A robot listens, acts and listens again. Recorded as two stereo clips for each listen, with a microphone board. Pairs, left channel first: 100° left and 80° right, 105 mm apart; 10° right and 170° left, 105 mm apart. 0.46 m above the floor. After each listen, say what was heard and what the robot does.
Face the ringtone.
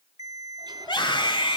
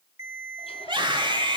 The ringtone: 130° right. Turn 130° right.
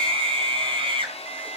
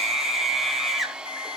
Keep listening.
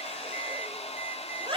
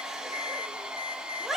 Keep listening.
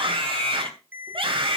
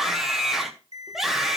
The ringtone is now 10° right. Turn 10° right.
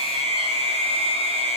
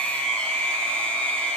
Keep listening.
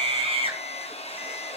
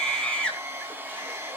Keep listening.
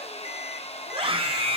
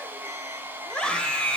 Facing where the ringtone came from. I can't hear it now.